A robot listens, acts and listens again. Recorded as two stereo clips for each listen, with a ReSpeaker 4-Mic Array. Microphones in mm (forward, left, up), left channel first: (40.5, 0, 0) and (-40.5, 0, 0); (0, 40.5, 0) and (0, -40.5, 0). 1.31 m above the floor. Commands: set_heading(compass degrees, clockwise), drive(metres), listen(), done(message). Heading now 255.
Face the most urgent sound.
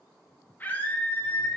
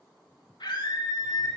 set_heading(185)
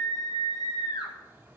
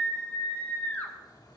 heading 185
set_heading(165)
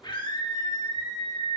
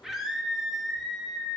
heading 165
done("Facing the scream.")